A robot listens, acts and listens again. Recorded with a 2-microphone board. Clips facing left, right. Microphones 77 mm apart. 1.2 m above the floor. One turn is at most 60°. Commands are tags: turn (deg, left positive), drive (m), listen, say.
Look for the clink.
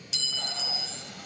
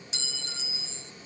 <turn deg="-30"/>
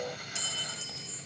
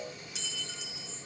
<say>Found it: a clink, straight ahead.</say>